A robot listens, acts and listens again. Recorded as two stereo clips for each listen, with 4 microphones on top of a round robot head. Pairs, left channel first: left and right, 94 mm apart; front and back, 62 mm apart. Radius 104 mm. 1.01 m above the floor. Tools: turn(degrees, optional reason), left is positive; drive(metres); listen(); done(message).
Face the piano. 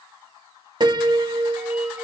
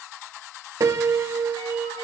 turn(degrees=-130, reason="The piano: 130° right.")
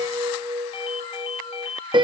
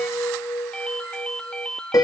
turn(degrees=-45, reason="The piano is now 45° right.")
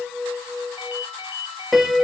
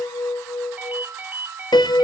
done("Found it: a piano, straight ahead.")